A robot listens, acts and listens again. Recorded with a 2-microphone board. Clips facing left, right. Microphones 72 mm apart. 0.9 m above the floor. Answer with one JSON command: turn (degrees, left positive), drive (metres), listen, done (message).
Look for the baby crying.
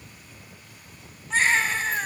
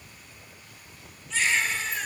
{"turn": 45}
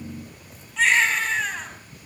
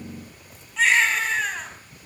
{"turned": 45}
{"done": "Facing the baby crying, over 4 m away."}